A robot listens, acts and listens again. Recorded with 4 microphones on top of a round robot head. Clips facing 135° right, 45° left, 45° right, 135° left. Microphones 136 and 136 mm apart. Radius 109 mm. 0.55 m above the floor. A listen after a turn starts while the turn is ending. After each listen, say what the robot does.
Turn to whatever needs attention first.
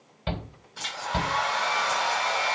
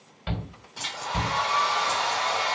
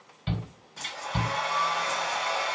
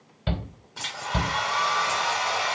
Turn 165° left.
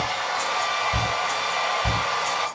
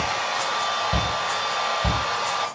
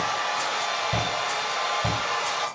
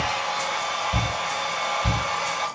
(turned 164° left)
Found it: a shout, straight ahead.